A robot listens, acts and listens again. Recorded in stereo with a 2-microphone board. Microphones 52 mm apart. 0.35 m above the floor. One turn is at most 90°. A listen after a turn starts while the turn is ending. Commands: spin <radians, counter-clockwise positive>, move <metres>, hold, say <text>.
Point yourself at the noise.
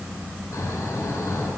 spin 1.31
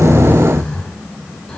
spin 0.26
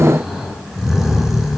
say Found it: snoring, straight ahead.